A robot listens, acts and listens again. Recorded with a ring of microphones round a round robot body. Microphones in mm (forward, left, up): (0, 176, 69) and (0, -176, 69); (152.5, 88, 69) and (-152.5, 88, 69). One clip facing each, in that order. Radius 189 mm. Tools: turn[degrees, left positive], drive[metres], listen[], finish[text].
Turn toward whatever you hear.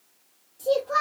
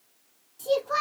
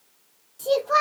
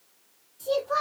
Thought: The child speaking: 15° right.
Action: turn[-15]
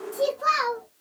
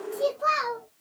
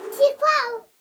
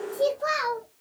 Thought: The child speaking is now 10° left.
Action: turn[10]
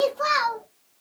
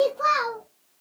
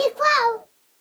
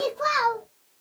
Thought: The child speaking is now 15° left.
Action: turn[15]
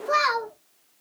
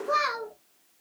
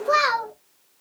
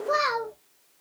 Thought: The child speaking is now 15° left.
Action: turn[15]
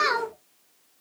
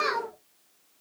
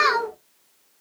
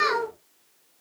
Thought: The child speaking is now 15° left.
Action: turn[15]
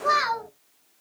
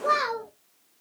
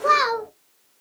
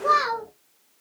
Thought: The child speaking is now 10° left.
Action: turn[10]
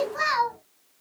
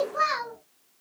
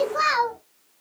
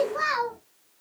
Thought: The child speaking is now 10° left.
Action: turn[10]
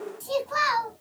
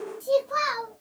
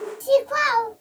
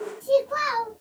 Action: finish[Facing the child speaking.]